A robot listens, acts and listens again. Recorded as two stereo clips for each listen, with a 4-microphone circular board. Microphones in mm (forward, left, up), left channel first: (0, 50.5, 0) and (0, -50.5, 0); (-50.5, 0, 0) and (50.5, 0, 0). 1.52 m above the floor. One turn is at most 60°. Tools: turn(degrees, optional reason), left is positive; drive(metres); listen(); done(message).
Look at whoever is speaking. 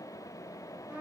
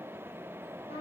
listen()
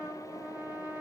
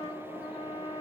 listen()
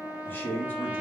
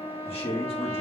turn(degrees=60, reason="The man speaking: 160° left.")
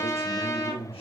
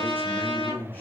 turn(degrees=60, reason="The man speaking is now 110° left.")
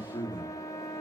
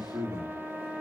turn(degrees=45, reason="The man speaking is now 45° left.")
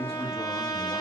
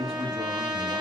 done("Facing the man speaking.")